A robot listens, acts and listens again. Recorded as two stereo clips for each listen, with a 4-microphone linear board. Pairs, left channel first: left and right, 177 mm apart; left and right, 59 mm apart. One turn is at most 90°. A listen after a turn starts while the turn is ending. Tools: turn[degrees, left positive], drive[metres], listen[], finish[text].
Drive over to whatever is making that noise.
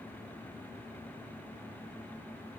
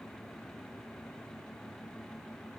Action: listen[]
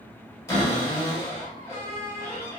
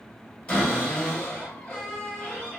Thought: The cupboard door: about 20° left or 160° left.
Action: turn[20]
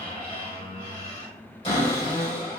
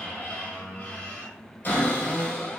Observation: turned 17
Thought: So it is at 145° left.
Action: turn[90]
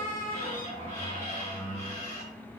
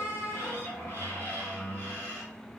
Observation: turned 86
Thought: The cupboard door is now 50° left.
Action: turn[50]
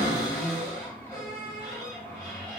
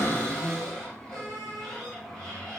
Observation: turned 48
Action: drive[1.0]
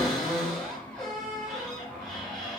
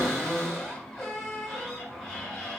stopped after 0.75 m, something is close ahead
Action: finish[Arrived at the cupboard door, straight ahead.]